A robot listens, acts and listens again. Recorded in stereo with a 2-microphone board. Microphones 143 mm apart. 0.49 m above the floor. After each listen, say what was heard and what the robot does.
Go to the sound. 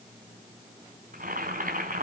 Turn 90° right.
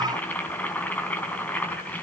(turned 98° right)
So it is at 10° left. Turn 10° left.
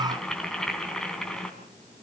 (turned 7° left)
Drive 1.0 m forward.
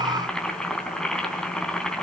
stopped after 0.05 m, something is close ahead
Blocked. The boiling is further on, straight ahead.